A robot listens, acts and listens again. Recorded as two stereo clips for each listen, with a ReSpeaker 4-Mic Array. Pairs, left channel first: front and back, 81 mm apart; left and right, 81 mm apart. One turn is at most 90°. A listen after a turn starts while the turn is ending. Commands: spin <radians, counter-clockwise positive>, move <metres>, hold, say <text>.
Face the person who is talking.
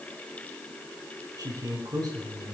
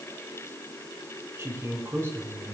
spin -1.57
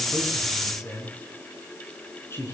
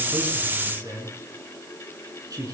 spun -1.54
spin -0.96
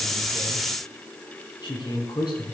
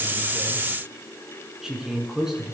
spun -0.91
say Found it: a man speaking, straight ahead.